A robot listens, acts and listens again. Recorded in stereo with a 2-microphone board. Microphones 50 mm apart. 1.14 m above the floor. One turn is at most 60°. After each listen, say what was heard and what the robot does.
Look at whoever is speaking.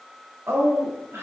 The woman speaking: about 55° right or 125° right. Turn 55° right.
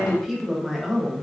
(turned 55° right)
Facing the woman speaking.